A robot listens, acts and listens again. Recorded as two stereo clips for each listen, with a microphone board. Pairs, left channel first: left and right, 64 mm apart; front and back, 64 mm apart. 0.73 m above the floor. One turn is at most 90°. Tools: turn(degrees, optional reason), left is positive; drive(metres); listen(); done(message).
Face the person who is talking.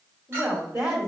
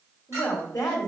turn(degrees=-40, reason="The woman speaking: 40° right.")
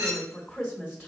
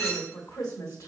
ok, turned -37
done("Found it: a woman speaking, straight ahead, 1 to 2 m away.")